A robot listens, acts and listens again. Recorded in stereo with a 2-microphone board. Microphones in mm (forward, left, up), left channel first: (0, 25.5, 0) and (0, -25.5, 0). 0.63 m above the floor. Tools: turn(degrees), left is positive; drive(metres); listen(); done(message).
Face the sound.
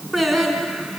turn(degrees=30)
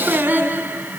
turn(degrees=-35)
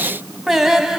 turn(degrees=-10)
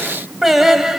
turn(degrees=-10)
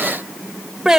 turn(degrees=-15)
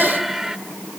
turn(degrees=-10)
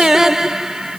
turn(degrees=-10)
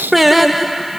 done("Found it: singing, straight ahead.")